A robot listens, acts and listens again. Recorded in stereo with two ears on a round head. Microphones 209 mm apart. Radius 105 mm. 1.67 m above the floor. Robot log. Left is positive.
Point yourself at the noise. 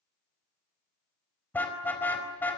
cmd yaw +30
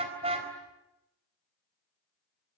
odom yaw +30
note: So it is at 25° right.
cmd yaw -25
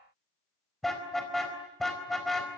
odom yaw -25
end: Found it: a car horn, straight ahead, over 4 m away.